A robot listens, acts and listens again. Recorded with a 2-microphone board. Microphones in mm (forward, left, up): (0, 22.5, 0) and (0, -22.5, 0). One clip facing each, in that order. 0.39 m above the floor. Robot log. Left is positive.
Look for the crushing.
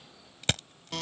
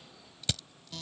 note: The crushing: about 50° left or 130° left.
cmd yaw +50
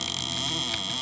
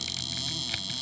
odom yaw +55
cmd idle
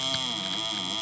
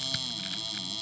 cmd idle
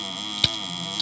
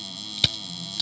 end: Facing the crushing.